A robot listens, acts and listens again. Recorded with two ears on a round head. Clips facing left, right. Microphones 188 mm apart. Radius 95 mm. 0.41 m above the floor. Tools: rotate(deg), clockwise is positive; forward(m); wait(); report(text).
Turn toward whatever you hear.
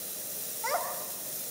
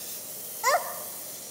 rotate(65)
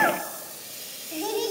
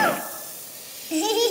rotate(65)
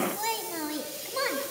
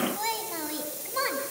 report("Found it: a child speaking, straight ahead.")